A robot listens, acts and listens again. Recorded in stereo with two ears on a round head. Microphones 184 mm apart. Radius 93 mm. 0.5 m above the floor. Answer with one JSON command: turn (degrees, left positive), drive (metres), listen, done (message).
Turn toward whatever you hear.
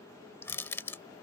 {"turn": 30}
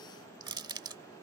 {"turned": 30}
{"turn": -20}
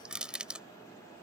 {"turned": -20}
{"done": "Found it: crushing, straight ahead."}